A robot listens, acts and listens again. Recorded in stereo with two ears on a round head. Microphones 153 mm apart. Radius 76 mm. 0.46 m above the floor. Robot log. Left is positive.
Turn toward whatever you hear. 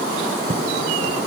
note: The writing: about 40° right or 140° right.
cmd yaw -40
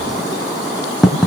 end: Facing the writing.